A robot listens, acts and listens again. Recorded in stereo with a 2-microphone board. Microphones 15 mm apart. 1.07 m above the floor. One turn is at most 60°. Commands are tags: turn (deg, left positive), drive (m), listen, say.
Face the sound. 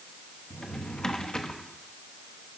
<turn deg="50"/>
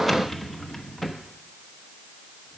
<say>Facing the drawer, under 1 m away.</say>